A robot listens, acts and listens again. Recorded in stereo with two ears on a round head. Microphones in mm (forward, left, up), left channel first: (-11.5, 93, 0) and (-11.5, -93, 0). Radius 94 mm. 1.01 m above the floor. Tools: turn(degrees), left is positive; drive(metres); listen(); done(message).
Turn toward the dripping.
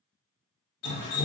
turn(degrees=90)
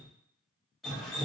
done("Facing the dripping.")